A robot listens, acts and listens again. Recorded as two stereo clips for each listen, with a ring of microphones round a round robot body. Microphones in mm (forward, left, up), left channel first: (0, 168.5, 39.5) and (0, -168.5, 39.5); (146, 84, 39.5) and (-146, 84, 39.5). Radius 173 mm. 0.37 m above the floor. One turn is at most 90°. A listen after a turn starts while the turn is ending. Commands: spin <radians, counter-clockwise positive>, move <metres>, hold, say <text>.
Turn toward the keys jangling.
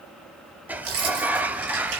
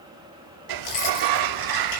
spin -0.70
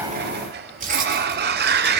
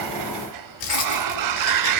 spin -0.44
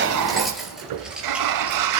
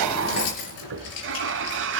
say Found it: keys jangling, straight ahead, over 4 m away.